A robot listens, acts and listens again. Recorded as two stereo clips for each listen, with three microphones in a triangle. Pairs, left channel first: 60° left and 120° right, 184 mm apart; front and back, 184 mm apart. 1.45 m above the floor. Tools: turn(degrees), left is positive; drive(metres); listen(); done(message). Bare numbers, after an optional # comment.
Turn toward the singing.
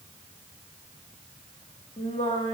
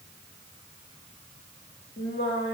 done("Facing the singing, 2 to 4 m away.")